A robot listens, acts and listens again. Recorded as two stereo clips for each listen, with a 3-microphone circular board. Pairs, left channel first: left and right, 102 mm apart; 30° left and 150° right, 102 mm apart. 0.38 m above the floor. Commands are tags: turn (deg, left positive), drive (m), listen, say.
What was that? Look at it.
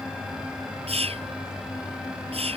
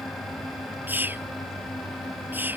<turn deg="-80"/>
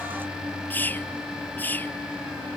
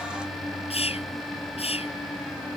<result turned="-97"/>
<turn deg="20"/>
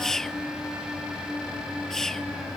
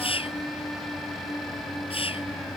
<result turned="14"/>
<say>Facing the whispering.</say>